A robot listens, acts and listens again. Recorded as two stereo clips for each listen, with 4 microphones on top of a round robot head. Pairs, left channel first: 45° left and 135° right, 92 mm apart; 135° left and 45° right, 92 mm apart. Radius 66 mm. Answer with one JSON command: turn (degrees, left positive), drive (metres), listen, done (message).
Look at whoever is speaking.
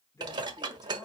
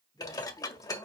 {"turn": 100}
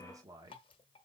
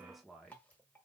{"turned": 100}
{"turn": -140}
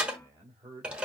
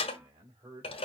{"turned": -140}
{"turn": -85}
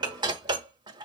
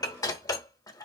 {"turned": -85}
{"listen": true}
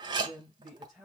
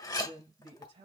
{"turn": -50}
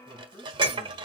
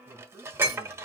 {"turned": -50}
{"turn": 20}
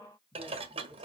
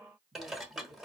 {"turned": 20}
{"done": "Facing the man speaking, 2 to 4 m away."}